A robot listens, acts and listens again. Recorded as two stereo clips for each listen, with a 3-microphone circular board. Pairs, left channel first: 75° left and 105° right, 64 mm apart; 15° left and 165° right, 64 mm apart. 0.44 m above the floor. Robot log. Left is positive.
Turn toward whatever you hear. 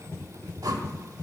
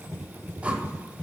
note: The whoosh: 100° right.
cmd yaw -100
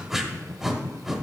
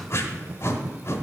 note: The whoosh is now 20° right.
cmd yaw -20
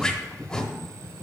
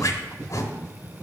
end: Facing the whoosh, under 1 m away.